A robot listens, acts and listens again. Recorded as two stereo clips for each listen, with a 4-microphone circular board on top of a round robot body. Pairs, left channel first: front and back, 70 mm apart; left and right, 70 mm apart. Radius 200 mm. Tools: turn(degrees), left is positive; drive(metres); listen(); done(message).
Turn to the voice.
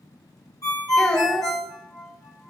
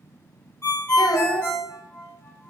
turn(degrees=75)
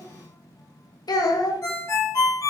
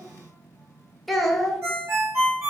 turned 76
done("Facing the child speaking, under 1 m away.")